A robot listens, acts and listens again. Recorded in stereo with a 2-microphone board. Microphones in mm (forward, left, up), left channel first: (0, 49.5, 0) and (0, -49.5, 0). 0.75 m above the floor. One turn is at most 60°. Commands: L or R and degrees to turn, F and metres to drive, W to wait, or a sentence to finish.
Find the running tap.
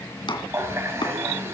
R30
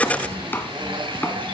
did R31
R60
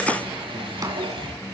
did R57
R60
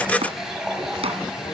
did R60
Found it: a running tap, straight ahead, 2 to 4 m away.